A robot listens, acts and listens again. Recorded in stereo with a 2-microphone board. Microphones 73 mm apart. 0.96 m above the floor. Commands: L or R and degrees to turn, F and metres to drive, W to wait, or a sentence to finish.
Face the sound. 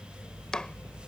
L30
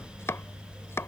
L140
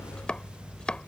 L15
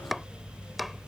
Found it: chopping, straight ahead.